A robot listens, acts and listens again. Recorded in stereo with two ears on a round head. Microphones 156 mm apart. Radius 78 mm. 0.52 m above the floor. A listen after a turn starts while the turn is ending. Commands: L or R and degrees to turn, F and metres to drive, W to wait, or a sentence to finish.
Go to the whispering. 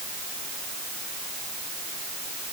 W
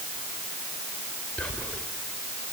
L30
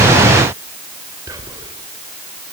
R20
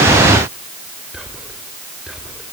F1.0
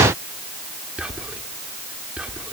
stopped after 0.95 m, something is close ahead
R10
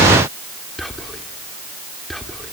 Arrived at the whispering, straight ahead.